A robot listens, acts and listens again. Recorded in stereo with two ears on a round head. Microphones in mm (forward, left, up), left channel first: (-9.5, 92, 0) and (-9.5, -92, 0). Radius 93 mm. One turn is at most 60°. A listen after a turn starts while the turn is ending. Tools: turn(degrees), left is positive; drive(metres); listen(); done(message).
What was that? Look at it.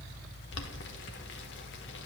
turn(degrees=60)
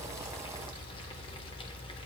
listen()
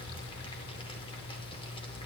listen()
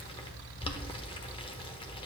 turn(degrees=30)
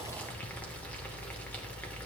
listen()
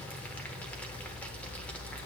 turn(degrees=10)
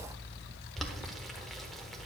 done("Facing the boiling, under 1 m away.")